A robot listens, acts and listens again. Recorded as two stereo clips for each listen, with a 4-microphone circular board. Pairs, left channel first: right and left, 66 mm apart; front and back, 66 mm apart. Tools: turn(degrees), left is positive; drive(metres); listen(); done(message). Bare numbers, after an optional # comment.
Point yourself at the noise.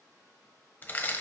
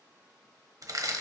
# The crushing: 155° right.
turn(-155)
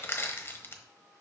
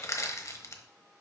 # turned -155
# The crushing is now 40° right.
turn(-40)
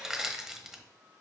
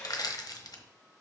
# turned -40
done("Facing the crushing, 1 to 2 m away.")